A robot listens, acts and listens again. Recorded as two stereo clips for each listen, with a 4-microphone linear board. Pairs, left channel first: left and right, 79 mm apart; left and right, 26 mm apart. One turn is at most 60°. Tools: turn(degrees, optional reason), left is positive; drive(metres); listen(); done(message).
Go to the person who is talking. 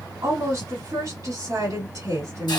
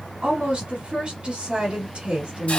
turn(degrees=-60, reason="The woman speaking: about 60° right or 120° right.")
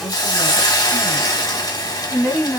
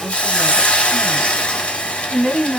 drive(metres=1.0)
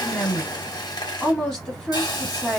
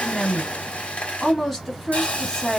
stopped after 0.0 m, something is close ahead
done("Blocked. The woman speaking is further on, straight ahead.")